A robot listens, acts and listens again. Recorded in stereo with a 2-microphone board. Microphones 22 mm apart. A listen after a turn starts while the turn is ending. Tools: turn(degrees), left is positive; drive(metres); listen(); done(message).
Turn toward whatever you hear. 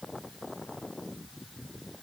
listen()
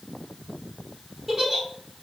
turn(degrees=-30)
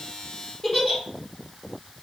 turn(degrees=20)
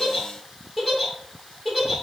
done("Facing the giggle, 1 to 2 m away.")